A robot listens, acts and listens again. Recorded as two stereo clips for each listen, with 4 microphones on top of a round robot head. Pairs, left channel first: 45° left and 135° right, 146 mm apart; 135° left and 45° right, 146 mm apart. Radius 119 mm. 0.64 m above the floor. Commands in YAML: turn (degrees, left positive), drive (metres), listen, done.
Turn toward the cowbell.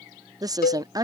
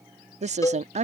turn: 65
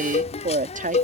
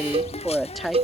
done: "Found it: a cowbell, straight ahead."